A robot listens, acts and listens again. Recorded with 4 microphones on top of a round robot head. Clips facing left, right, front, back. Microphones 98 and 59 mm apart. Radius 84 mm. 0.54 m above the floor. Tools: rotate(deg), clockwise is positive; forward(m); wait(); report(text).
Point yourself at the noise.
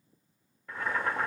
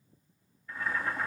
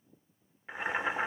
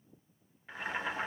rotate(-70)
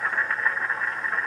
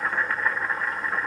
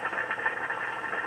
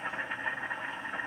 report("Facing the boiling.")